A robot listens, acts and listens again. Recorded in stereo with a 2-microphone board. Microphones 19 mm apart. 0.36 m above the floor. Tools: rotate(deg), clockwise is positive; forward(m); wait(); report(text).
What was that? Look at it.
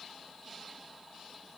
wait()
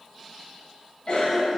rotate(-55)
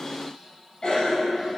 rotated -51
rotate(-50)
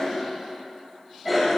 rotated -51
report("Found it: a cough, straight ahead, 1 to 2 m away.")